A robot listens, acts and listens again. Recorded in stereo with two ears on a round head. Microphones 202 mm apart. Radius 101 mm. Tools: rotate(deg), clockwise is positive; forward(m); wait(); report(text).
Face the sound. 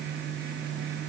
wait()
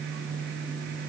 wait()
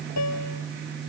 rotate(-90)
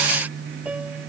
report("Facing the piano.")